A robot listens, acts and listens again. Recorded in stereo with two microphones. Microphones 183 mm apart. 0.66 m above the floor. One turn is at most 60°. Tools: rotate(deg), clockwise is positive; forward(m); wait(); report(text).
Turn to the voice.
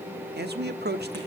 rotate(60)
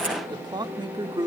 rotate(25)
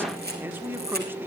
rotate(15)
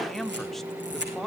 report("Found it: a man speaking, straight ahead.")